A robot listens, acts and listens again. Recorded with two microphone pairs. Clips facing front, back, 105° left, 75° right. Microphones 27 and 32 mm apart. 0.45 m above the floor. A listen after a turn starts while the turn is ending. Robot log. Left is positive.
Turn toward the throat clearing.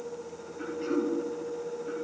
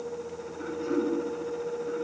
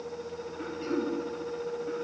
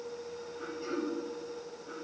note: The throat clearing: 55° left.
cmd yaw +55
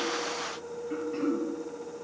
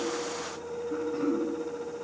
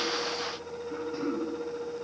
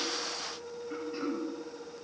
end: Facing the throat clearing, over 4 m away.